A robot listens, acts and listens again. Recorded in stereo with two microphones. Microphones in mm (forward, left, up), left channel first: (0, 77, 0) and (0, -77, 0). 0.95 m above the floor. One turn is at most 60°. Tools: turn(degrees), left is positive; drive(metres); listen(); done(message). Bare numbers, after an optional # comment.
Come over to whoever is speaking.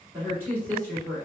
# The woman speaking: about 15° right or 165° right.
turn(-15)
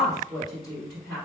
drive(1.0)
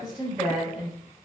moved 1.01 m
drive(1.0)
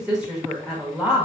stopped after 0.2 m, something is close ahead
done("I am next to the woman speaking.")